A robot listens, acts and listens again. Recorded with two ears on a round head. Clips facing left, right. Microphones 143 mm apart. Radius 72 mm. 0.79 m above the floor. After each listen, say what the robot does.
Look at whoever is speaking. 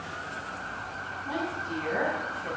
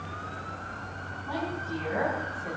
Turn 30° left.
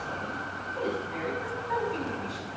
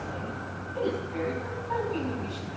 Turn 10° left.
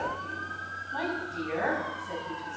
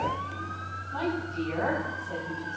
Turn 15° left.
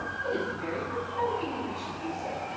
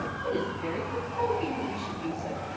Facing the woman speaking.